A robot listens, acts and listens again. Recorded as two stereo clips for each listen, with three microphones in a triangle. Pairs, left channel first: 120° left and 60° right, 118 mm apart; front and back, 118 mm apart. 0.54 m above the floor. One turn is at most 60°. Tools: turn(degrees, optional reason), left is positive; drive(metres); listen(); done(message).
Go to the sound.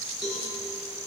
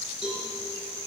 turn(degrees=-60, reason="The cowbell: 145° right.")
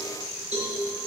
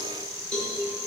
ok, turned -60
turn(degrees=-60, reason="The cowbell is now 85° right.")
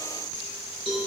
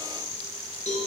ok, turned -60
turn(degrees=-20, reason="The cowbell is now 20° right.")
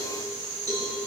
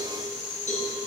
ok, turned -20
drive(metres=1.0)
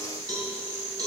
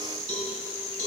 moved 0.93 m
drive(metres=1.0)
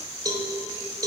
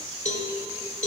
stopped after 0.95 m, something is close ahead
done("Arrived at the cowbell, straight ahead.")